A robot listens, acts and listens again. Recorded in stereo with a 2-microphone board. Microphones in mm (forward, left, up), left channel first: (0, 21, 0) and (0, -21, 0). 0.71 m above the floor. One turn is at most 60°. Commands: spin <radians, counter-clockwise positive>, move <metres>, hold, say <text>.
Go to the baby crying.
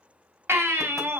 spin -1.05
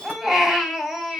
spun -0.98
move 1.0
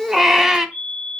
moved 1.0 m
spin -0.17
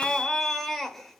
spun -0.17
move 1.0
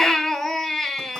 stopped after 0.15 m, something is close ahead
say Arrived at the baby crying, straight ahead.